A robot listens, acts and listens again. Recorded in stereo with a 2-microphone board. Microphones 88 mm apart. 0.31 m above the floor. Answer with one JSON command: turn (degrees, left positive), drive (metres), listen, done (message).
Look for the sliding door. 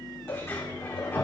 {"turn": 30}
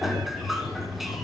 {"done": "Found it: a sliding door, straight ahead, over 4 m away."}